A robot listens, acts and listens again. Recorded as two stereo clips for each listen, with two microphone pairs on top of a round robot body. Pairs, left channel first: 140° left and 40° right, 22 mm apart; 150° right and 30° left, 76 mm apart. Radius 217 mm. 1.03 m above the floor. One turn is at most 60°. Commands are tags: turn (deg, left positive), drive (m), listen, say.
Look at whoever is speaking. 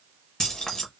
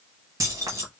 <listen/>
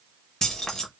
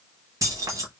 <listen/>
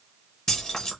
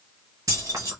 <say>I can't make out anyone speaking, only keys jangling.</say>